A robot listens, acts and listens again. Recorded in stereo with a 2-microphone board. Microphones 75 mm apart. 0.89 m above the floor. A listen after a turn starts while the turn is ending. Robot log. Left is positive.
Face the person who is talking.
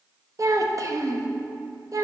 note: The child speaking: about 50° right or 130° right.
cmd yaw -50
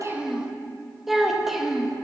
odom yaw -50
end: Facing the child speaking, under 1 m away.